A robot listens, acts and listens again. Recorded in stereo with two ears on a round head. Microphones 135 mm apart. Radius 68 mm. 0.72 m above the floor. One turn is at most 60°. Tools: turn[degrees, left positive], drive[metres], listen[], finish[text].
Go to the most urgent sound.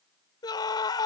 Thought: The scream: about 30° left or 150° left.
Action: turn[30]
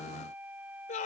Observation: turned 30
Thought: So it is at 120° left.
Action: turn[60]
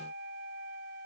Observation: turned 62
Thought: Nothing new. It was at 60° left.
Action: turn[60]
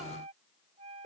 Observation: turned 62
Action: listen[]
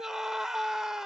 Action: drive[1.0]
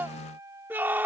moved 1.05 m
Thought: The scream is now 15° right.
Action: turn[-15]
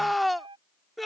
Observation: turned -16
Action: drive[1.0]
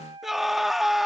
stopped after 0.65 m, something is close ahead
Action: finish[I am next to the scream.]